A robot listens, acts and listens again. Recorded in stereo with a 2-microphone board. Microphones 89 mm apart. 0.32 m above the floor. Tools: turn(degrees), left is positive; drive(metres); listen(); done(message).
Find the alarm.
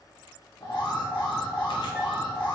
turn(degrees=55)
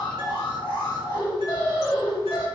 turn(degrees=60)
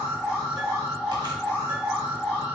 turn(degrees=-10)
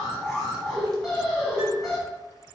done("Found it: an alarm, straight ahead.")